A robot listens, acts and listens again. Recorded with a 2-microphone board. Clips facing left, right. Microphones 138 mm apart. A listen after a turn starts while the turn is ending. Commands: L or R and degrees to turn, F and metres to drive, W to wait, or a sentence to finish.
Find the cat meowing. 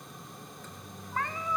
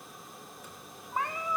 R30
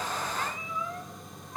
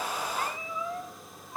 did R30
R15
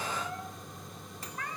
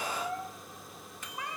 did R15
R15
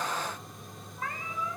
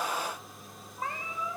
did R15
R20
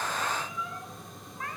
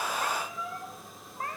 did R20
R145
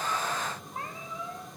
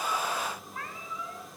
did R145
L30
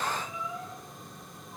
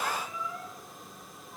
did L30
L15
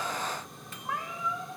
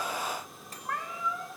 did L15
Facing the cat meowing.